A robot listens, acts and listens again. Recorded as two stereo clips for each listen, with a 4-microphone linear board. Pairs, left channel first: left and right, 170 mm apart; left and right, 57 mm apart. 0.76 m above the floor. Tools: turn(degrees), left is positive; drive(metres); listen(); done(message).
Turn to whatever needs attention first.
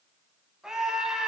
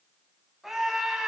turn(degrees=-30)
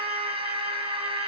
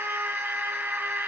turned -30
turn(degrees=-150)
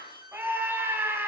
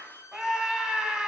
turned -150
turn(degrees=-10)
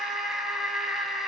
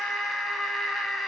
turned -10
done("Facing the scream.")